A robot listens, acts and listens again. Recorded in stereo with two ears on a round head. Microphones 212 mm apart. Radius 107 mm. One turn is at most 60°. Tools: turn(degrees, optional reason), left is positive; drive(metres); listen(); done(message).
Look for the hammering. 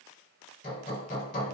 turn(degrees=40, reason="The hammering: about 40° left or 140° left.")
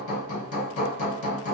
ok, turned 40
turn(degrees=60, reason="So it is at 90° left.")
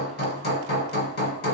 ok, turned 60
turn(degrees=55, reason="The hammering is now 55° left.")
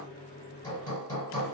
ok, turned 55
turn(degrees=20, reason="The hammering is now 20° left.")
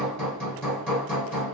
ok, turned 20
done("Found it: hammering, straight ahead, 1 to 2 m away.")